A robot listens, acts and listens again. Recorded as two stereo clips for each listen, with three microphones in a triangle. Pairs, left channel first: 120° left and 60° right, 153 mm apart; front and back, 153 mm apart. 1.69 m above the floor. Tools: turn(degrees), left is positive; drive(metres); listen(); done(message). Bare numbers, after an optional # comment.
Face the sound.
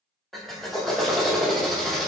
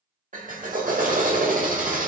# The drill: 150° right.
turn(-150)
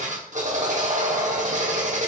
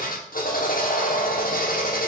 # The drill is now 25° right.
turn(-25)
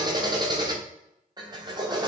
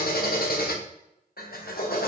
done("Facing the drill.")